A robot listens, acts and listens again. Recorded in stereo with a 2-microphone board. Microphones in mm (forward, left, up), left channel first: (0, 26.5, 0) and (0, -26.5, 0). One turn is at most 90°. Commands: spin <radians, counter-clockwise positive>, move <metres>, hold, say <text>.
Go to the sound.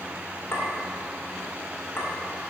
spin 0.87
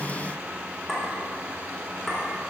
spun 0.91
move 1.0
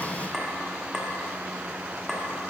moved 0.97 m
spin -0.17
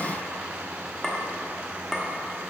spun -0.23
move 1.0
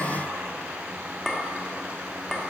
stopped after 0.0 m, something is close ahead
say Arrived at the clink, straight ahead.